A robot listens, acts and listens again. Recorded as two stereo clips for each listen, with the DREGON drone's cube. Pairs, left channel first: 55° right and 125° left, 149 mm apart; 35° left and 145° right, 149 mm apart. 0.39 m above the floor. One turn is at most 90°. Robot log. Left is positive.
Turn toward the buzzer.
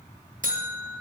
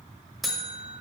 note: The buzzer: 125° left.
cmd yaw +90
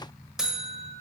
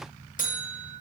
note: The buzzer is now 40° left.
cmd yaw +40
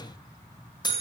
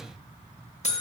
end: Found it: a buzzer, straight ahead.